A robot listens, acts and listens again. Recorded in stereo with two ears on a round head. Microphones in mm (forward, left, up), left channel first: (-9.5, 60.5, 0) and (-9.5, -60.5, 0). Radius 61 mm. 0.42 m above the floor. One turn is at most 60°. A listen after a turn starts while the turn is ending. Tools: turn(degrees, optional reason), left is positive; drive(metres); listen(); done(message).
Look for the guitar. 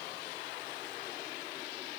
listen()
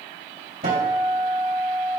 turn(degrees=-50, reason="The guitar: about 50° right or 130° right.")
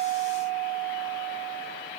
turn(degrees=-15, reason="So it is at 15° right.")
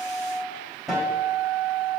done("Facing the guitar.")